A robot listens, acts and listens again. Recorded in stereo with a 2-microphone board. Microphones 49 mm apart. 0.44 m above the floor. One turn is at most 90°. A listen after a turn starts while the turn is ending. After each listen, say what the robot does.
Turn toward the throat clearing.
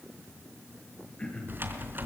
Turn 25° left.
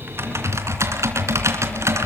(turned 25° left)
Keep listening.
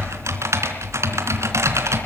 Keep listening.
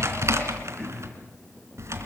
I heard throat clearing, but can't make it out now. It was about straight ahead or 130° left.